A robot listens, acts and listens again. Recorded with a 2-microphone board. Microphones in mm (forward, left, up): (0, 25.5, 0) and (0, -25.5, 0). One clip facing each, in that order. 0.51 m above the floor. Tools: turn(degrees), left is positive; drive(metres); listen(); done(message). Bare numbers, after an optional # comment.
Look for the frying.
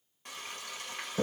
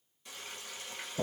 # The frying: about 50° left or 130° left.
turn(50)
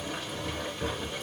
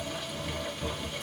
listen()
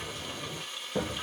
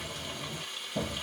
done("Facing the frying, 1 to 2 m away.")